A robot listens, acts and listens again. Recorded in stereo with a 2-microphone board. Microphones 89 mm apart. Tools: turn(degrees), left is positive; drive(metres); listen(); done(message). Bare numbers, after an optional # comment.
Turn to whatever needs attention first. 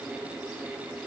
listen()
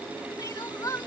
# The crying: about 45° left or 135° left.
turn(45)
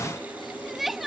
done("Found it: crying, straight ahead.")